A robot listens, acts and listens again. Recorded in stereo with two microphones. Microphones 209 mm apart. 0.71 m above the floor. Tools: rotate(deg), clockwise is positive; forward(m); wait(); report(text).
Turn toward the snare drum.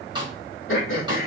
rotate(20)
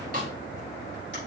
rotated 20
rotate(140)
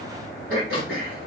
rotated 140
wait()
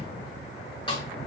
rotate(-25)
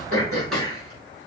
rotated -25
wait()
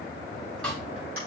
report("Found it: a snare drum, straight ahead.")